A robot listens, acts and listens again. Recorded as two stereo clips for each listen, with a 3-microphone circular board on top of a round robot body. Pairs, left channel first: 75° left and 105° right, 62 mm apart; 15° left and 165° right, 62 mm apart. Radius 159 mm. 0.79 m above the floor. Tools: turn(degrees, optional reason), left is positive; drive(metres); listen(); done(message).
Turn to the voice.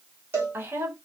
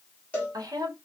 turn(degrees=-155, reason="The woman speaking: 155° right.")
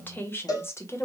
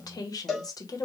turn(degrees=30, reason="The woman speaking is now 30° left.")
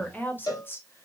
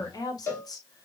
turn(degrees=20, reason="The woman speaking is now 20° left.")
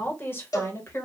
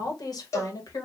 turn(degrees=30, reason="The woman speaking is now 30° left.")
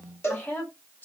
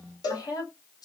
turn(degrees=10, reason="The woman speaking is now 10° left.")
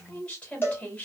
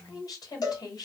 done("Facing the woman speaking, 1 to 2 m away.")